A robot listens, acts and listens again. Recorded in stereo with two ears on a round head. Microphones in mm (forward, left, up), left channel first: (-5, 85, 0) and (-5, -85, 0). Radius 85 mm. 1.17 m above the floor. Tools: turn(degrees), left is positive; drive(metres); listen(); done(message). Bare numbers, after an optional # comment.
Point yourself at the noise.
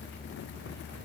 listen()
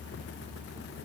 listen()
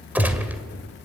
turn(-30)
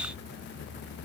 listen()
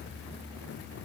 done("I heard a gunshot, but can't make it out now. It was about 20° left or 140° right.")